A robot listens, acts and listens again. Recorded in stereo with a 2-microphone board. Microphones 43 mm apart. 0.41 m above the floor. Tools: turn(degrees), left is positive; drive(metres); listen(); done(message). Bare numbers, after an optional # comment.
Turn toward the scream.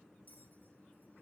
listen()
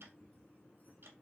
listen()
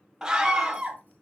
turn(-30)
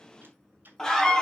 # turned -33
# So it is at 20° left.
turn(20)
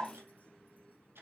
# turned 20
listen()
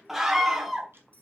done("Found it: a scream, straight ahead, 2 to 4 m away.")